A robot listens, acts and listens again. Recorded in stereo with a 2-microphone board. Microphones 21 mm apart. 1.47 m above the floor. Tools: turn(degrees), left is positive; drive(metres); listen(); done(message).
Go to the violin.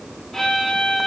turn(degrees=20)
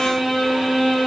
drive(metres=1.0)
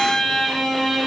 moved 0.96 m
turn(degrees=10)
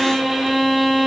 drive(metres=1.0)
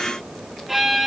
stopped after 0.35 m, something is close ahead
turn(degrees=-10)
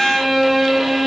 done("Blocked. The violin is further on, straight ahead.")